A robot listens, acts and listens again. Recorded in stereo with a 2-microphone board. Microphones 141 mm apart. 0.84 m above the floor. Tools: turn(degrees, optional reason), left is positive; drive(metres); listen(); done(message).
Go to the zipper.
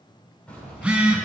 turn(degrees=30)
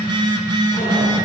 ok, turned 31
listen()
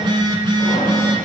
listen()
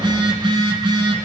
done("I heard a zipper, but can't make it out now. It was about 20° right or 140° left. I did not reach it.")